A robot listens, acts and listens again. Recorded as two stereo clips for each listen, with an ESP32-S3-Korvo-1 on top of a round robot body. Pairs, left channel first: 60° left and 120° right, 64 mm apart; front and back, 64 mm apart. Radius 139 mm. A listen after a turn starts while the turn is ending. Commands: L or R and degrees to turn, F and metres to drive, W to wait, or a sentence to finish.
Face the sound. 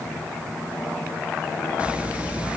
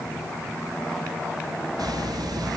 L170
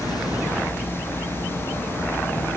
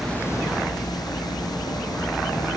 Found it: a hiss, straight ahead.